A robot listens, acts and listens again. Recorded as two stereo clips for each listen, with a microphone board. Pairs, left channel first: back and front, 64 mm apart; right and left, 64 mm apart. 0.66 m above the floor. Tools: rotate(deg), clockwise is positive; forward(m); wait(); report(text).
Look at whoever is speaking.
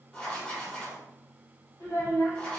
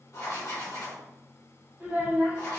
rotate(-165)
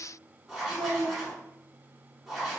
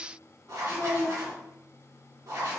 report("Found it: a child speaking, straight ahead.")